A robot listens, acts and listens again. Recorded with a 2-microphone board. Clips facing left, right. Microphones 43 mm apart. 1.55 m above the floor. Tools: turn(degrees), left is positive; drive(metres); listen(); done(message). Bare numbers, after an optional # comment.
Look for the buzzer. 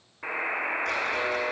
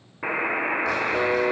# The buzzer: about 20° right or 160° right.
turn(-20)
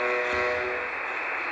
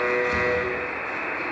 done("Found it: a buzzer, straight ahead, 1 to 2 m away.")